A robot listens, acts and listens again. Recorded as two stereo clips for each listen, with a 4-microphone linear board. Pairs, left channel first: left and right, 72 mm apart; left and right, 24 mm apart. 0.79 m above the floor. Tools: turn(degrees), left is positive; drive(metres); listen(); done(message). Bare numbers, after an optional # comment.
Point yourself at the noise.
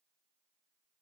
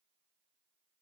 listen()
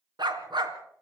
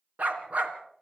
turn(-90)
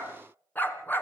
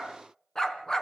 # So it is at 25° left.
turn(25)
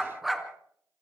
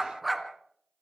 done("Facing the dog barking, 2 to 4 m away.")